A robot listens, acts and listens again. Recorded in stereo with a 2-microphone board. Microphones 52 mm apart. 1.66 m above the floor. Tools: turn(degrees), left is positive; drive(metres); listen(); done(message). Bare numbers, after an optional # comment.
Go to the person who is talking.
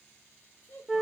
# The child speaking: about 55° left or 125° left.
turn(55)
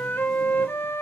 listen()
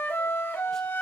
listen()
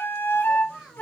drive(1.0)
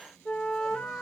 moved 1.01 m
listen()
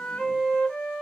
listen()
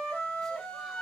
done("I heard a child speaking from this way, but can't make it out now. I did not reach it.")